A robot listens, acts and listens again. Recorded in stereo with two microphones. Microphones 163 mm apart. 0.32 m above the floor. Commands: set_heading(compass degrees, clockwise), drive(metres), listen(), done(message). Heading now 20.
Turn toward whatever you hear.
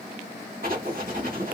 set_heading(85)
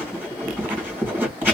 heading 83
set_heading(98)
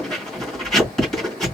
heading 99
done("Facing the writing.")